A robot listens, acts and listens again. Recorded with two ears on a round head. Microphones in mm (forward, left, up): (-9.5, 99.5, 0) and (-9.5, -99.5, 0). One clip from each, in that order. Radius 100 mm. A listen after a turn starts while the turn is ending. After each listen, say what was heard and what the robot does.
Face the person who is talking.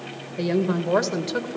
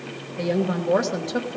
The woman speaking: about 40° left or 140° left. Turn 40° left.
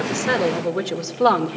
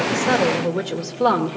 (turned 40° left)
So it is at 20° left. Turn 20° left.
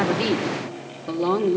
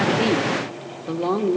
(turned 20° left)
The woman speaking is now 20° left. Turn 20° left.
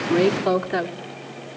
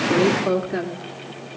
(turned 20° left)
The woman speaking is now 25° left. Turn 25° left.
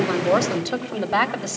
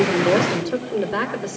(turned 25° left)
The woman speaking is now 25° left. Turn 25° left.
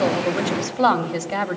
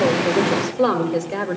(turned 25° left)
The woman speaking is now 10° left. Turn 10° left.
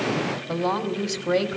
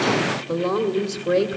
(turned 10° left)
Facing the woman speaking, 1 to 2 m away.